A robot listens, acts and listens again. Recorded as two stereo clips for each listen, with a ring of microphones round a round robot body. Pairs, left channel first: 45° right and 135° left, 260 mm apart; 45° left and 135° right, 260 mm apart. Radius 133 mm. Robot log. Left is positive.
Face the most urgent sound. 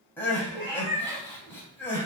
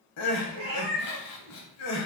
note: The crying: 35° left.
cmd yaw +35
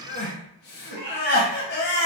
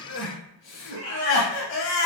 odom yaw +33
end: Found it: crying, straight ahead, under 1 m away.